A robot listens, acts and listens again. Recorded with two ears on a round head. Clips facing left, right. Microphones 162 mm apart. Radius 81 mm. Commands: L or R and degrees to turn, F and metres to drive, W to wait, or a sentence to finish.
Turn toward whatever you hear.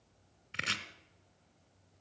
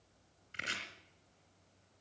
L65
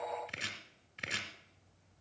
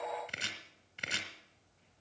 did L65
Found it: chopping, straight ahead, 2 to 4 m away.